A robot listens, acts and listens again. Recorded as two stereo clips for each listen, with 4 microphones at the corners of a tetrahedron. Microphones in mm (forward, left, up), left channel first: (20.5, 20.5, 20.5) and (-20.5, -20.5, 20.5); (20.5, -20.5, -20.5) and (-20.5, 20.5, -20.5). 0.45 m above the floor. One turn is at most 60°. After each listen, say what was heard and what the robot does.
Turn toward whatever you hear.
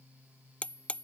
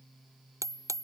The hammering: 110° left. Turn 60° left.
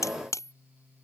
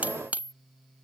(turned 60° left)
The hammering is now 70° left. Turn 60° left.
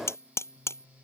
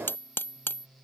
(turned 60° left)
Found it: hammering, straight ahead.